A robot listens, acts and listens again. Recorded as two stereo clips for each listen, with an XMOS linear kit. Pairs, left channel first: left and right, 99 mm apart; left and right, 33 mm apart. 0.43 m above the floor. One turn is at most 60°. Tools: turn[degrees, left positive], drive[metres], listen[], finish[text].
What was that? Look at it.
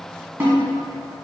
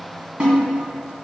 Thought: The snare drum: about 25° right or 155° right.
Action: turn[-25]
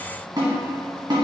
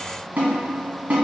Thought: So it is at 130° right.
Action: turn[-60]
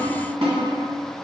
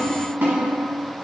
Thought: The snare drum is now 75° right.
Action: turn[-60]
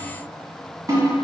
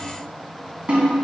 Thought: The snare drum is now 35° right.
Action: turn[-35]
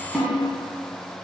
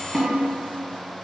Action: finish[Found it: a snare drum, straight ahead.]